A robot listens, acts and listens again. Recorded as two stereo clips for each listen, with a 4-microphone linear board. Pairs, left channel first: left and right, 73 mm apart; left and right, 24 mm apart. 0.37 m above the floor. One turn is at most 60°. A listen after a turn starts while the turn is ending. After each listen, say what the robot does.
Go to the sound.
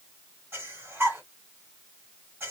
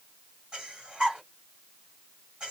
Turn 35° right.
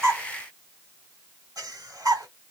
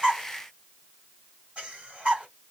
Turn 60° right.
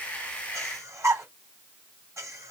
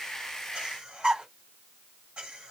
Turn 50° right.
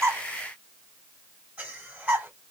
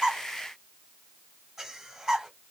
Turn 20° right.
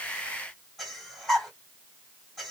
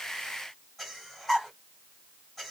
Drive 1.0 m forward.
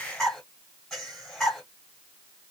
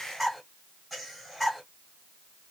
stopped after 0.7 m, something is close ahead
Arrived at the breathing, straight ahead.